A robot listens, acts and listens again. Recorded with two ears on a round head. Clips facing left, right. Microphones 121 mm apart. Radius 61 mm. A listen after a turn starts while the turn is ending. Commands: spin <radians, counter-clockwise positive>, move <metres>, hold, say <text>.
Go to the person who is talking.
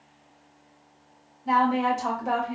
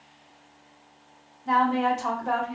spin 0.52
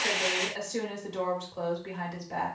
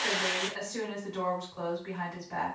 spin 2.44
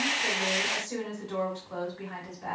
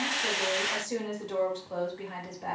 spin -0.44
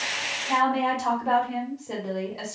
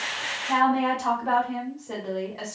spin 0.26
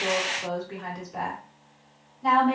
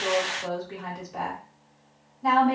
move 1.0
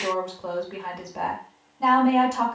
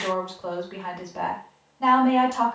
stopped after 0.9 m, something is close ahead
say I am next to the woman speaking.